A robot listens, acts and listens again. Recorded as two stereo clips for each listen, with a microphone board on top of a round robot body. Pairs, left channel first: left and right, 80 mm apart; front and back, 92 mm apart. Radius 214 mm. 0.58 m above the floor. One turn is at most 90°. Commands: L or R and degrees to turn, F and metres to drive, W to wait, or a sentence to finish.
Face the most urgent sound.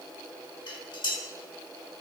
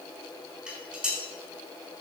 W
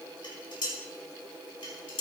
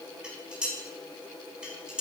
W
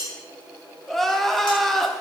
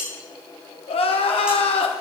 Facing the crying, 1 to 2 m away.